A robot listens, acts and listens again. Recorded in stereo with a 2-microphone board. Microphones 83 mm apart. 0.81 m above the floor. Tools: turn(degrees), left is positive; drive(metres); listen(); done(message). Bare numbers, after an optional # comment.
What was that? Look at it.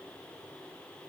listen()
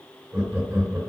# The laughter: about 35° right or 145° right.
turn(-35)
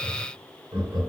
# So it is at 110° right.
turn(-110)
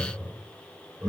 # The laughter is now 15° right.
turn(-15)
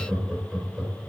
done("Facing the laughter.")